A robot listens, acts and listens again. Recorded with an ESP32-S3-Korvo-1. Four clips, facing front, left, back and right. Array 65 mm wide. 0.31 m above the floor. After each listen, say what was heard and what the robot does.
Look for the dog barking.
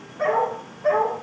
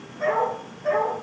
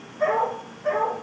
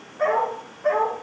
The dog barking: 40° right. Turn 40° right.
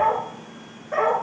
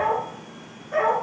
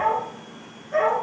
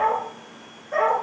The dog barking is now 25° right. Turn 25° right.
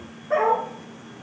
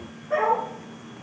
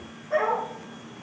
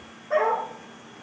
The dog barking is now 15° right. Turn 15° right.
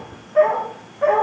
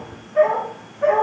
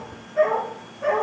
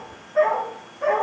The dog barking is now 10° right. Turn 10° right.
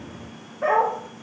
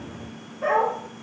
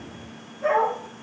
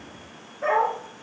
Facing the dog barking, over 4 m away.